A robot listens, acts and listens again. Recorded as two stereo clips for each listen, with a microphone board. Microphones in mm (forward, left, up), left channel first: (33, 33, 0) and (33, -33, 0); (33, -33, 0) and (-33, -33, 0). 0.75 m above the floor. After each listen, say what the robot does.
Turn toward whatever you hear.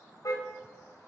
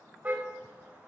Turn 120° left.
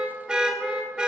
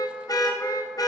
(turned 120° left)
Turn 15° right.
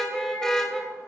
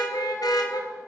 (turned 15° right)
Turn 10° left.
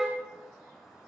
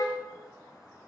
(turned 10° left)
Found it: a car horn, straight ahead, 2 to 4 m away.